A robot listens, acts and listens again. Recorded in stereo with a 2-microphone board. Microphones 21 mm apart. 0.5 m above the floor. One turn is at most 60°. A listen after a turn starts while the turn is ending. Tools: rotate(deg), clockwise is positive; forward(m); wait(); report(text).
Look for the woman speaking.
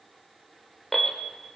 wait()
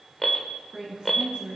rotate(50)
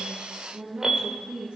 rotate(60)
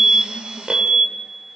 rotate(20)
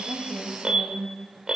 rotate(10)
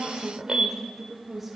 report("Facing the woman speaking.")